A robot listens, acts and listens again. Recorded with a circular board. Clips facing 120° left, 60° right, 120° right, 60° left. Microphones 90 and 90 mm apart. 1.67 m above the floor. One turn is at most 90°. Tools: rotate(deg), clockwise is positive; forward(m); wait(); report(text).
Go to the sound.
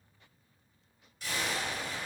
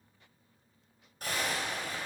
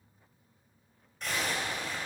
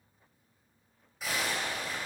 rotate(25)
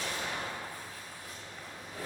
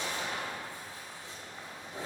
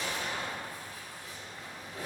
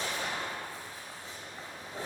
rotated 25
forward(1.0)
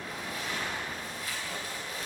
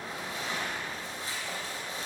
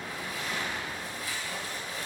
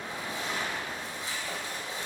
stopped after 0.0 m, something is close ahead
report("Blocked. The zipper is further on, straight ahead.")